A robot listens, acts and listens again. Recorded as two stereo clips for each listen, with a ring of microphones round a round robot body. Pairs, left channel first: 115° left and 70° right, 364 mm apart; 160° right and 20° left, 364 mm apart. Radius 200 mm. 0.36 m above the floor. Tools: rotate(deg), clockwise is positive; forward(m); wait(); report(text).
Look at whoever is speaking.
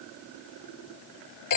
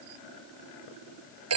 wait()
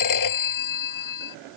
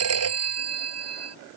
wait()
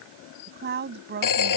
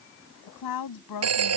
rotate(130)
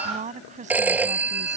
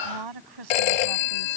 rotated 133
report("Found it: a woman speaking, straight ahead.")